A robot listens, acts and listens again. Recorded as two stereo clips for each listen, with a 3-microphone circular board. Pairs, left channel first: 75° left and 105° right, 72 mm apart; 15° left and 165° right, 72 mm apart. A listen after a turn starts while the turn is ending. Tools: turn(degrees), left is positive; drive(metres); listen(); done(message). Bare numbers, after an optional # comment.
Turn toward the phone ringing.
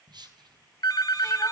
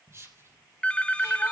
# The phone ringing: 85° left.
turn(85)
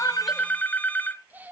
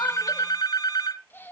# The phone ringing is now 10° left.
turn(10)
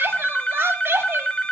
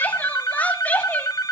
done("Found it: a phone ringing, straight ahead.")